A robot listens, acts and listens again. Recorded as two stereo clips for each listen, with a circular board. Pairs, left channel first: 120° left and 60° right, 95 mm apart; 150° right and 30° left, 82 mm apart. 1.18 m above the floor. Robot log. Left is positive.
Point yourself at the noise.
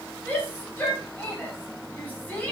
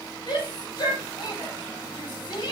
note: The shout: 170° right.
cmd yaw -170
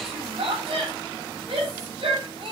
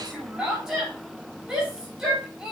note: The shout is now 50° right.
cmd yaw -50
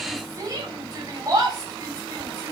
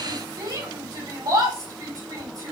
note: The shout is now 10° right.
cmd yaw -10
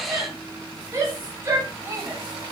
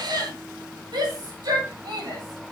end: Facing the shout, 2 to 4 m away.